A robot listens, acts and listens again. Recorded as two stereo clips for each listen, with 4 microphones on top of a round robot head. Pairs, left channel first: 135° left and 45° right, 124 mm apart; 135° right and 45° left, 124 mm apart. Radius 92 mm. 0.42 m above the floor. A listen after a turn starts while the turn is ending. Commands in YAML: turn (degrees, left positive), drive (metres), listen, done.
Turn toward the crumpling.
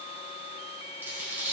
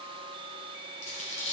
turn: -120
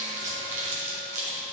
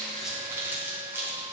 turn: -30
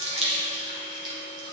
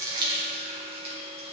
turn: 10
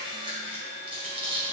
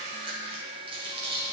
done: "Facing the crumpling."